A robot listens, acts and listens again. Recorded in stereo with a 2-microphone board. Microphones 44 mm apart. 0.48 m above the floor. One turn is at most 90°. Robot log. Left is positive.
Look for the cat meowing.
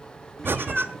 cmd yaw +30
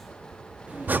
note: So it is at 30° right.
cmd yaw -30
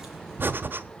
cmd idle
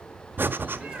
note: The cat meowing is now 25° right.
cmd yaw -25
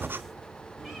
cmd idle
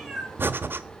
end: Facing the cat meowing, over 4 m away.